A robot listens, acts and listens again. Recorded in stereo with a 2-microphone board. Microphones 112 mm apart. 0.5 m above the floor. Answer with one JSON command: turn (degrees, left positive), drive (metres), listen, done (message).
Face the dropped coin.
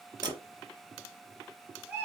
{"turn": -40}
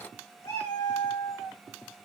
{"listen": true}
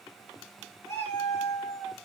{"done": "I heard a dropped coin, but can't make it out now. It was about straight ahead or 100° right."}